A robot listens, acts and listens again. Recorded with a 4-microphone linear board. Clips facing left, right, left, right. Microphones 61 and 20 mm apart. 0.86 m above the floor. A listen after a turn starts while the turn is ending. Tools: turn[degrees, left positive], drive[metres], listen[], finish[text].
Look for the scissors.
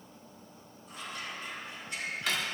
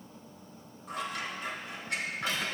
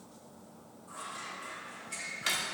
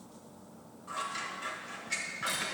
Thought: The scissors: about 75° right or 105° right.
Action: turn[-75]
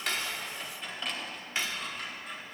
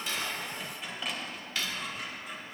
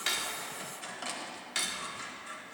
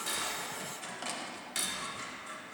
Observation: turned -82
Action: finish[Found it: scissors, straight ahead.]